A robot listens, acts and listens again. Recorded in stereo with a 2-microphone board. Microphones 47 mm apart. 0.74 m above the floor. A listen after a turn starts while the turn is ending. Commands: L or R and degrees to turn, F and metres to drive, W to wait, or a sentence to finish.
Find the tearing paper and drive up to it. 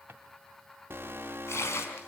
L90
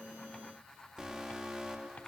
W
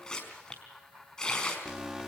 L15
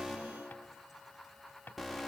W
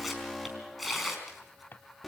F1.0
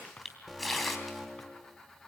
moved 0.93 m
F1.0
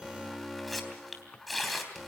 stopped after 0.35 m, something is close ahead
Blocked. The tearing paper is further on, straight ahead.